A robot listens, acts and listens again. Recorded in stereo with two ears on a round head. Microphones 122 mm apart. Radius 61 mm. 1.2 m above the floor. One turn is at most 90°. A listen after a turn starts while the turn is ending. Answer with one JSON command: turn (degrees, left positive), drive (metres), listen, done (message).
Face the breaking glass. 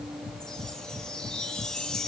{"listen": true}
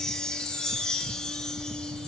{"listen": true}
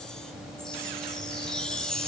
{"done": "I can't make out breaking glass to turn to."}